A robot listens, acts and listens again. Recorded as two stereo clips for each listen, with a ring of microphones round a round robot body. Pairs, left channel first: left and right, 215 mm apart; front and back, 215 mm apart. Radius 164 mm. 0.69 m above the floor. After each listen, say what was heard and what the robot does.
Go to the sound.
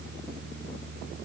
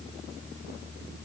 Keep listening.
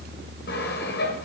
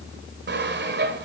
The sawing: 145° left. Turn 145° left.
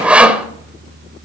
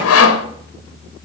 Drive 1.0 m forward.
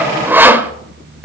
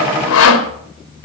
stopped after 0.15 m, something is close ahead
The sawing is now 10° right. Turn 10° right.
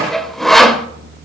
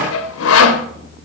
Blocked. The sawing is further on, straight ahead.